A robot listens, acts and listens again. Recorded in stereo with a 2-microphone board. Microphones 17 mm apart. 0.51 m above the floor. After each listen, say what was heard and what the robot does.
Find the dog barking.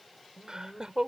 The dog barking: about 40° left or 140° left. Turn 40° left.
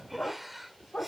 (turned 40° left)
So it is at 100° left. Turn 100° left.
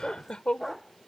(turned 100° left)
Found it: a dog barking, straight ahead.